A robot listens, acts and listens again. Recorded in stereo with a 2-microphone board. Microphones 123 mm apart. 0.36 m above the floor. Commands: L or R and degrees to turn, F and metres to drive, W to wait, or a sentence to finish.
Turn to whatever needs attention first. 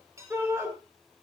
R20
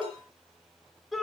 Found it: a shout, straight ahead.